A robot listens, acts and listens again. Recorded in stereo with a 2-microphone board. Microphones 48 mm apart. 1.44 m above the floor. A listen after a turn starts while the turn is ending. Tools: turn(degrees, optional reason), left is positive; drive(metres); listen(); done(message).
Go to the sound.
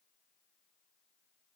listen()
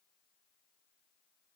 listen()
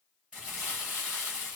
turn(degrees=-25, reason="The crumpling: about 25° right or 155° right.")
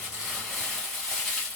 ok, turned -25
drive(metres=1.0)
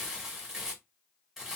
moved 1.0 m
turn(degrees=-10, reason="The crumpling is now 10° right.")
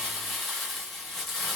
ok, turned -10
drive(metres=1.0)
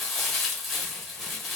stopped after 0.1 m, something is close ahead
done("Arrived at the crumpling, straight ahead.")